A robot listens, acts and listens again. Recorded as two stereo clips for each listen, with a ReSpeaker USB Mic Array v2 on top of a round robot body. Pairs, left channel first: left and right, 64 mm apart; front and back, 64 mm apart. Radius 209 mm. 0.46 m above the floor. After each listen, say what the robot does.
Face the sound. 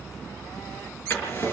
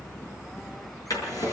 Turn 30° left.
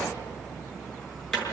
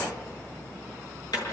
Turn 10° left.
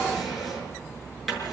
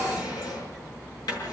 Found it: a drawer, straight ahead, over 4 m away.